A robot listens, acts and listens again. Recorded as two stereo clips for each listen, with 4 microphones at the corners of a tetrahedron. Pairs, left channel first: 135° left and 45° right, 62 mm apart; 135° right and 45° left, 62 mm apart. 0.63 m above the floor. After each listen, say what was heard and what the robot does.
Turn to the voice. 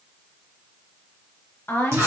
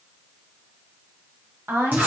The woman speaking: 90° left. Turn 90° left.
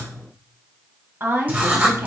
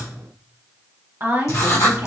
Found it: a woman speaking, straight ahead, 1 to 2 m away.